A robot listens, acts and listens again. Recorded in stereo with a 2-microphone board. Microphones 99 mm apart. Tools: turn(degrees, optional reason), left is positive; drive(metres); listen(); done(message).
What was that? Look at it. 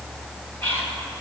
turn(degrees=15, reason="The whispering: about 15° left or 165° left.")
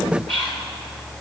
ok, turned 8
turn(degrees=30)
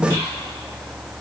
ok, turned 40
listen()
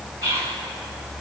turn(degrees=-30, reason="So it is at 30° right.")
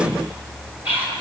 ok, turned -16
turn(degrees=-15, reason="The whispering is now 15° right.")
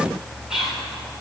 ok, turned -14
done("Facing the whispering, over 4 m away.")